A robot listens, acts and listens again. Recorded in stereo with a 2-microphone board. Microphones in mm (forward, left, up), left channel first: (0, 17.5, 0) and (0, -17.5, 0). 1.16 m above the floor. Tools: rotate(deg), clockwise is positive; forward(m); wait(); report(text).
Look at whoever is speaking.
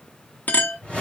wait()
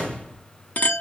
wait()
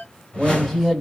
rotate(-30)
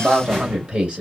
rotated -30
rotate(30)
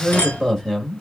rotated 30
rotate(-10)
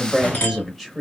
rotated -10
report("Facing the man speaking.")